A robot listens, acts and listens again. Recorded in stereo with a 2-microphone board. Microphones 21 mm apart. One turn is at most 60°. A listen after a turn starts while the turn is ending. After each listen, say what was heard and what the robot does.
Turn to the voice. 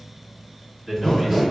Turn 30° right.
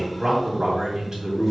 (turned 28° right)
So it is at 150° right. Turn 60° right.
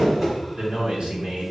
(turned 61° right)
The man speaking is now 90° right. Turn 60° right.
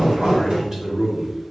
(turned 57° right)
The man speaking is now 30° right. Turn 30° right.
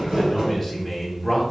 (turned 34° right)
Found it: a man speaking, straight ahead, 1 to 2 m away.